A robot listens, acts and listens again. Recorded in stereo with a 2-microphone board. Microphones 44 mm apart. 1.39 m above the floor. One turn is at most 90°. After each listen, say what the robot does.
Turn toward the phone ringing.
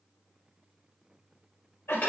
Keep listening.
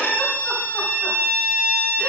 Keep listening.
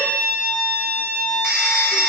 Turn 30° right.
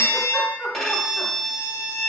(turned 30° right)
Turn 90° right.
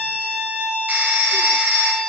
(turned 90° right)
Turn 45° right.
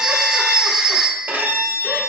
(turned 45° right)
Turn 15° right.
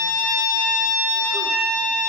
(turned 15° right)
Keep listening.
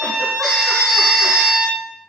Found it: a phone ringing, straight ahead.